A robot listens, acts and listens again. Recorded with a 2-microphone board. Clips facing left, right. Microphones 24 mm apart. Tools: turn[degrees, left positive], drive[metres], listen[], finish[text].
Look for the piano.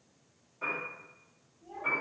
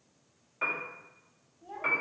Thought: The piano: about 70° right or 110° right.
Action: turn[-70]
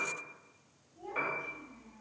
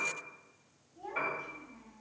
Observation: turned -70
Action: finish[Found it: a piano, straight ahead.]